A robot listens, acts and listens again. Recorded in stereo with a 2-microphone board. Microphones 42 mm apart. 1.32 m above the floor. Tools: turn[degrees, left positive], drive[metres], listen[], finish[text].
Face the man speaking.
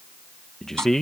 Action: turn[30]
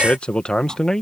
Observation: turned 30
Action: turn[30]
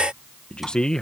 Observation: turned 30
Action: turn[30]
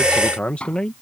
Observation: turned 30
Thought: So it is at 160° left.
Action: turn[160]
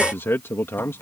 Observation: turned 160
Thought: The man speaking is now 70° left.
Action: turn[70]
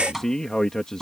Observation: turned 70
Thought: The man speaking is now 15° left.
Action: turn[15]
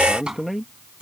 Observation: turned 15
Action: finish[Found it: a man speaking, straight ahead.]